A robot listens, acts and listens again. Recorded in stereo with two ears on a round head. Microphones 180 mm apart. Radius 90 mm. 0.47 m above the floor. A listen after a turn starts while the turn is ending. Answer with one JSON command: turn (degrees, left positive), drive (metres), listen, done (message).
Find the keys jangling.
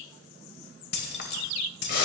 {"turn": 60}
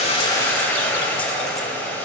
{"listen": true}
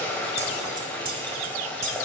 {"turn": -35}
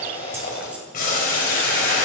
{"listen": true}
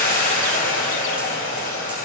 {"listen": true}
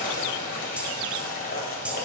{"done": "I heard keys jangling from this way, but can't make it out now."}